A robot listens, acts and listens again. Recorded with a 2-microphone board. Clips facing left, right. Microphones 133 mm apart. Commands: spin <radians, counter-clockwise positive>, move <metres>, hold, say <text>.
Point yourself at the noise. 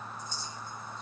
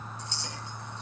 spin -1.13
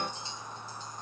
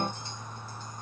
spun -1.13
hold
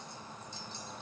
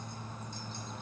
hold
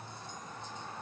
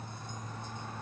say I heard a clink, but can't make it out now. It was about straight ahead or 50° right.